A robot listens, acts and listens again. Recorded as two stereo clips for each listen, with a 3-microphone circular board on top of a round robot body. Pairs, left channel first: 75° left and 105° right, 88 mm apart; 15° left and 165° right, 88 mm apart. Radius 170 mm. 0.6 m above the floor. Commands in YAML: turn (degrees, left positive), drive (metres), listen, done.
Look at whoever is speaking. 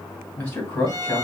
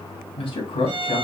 done: "Found it: a man speaking, straight ahead, 2 to 4 m away."